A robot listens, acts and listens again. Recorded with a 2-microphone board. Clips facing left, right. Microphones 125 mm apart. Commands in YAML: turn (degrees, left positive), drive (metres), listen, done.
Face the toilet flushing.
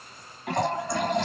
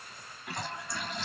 turn: 65
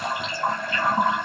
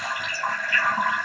turn: 30
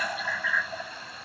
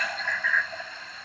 turn: 10
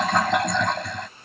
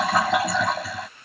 done: "Found it: a toilet flushing, straight ahead."